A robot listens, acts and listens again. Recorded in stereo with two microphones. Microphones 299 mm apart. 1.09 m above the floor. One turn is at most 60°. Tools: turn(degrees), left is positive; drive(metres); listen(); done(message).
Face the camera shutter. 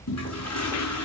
listen()
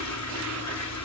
listen()
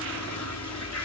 done("I can't make out a camera shutter to turn to.")